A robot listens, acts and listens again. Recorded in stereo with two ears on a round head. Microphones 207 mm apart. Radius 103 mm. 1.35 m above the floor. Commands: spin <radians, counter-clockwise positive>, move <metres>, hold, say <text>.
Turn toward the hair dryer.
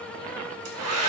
spin -1.22
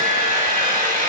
spin -0.61
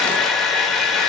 say Found it: a hair dryer, straight ahead, 1 to 2 m away.